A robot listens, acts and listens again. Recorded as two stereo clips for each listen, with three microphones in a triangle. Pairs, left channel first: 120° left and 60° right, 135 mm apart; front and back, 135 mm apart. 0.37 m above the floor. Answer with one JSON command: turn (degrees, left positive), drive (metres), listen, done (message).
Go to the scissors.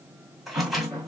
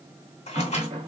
{"turn": 30}
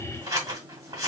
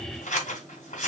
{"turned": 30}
{"drive": 1.0}
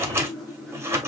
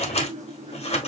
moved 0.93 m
{"drive": 1.0}
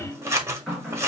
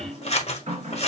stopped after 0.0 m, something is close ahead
{"done": "Arrived at the scissors, straight ahead."}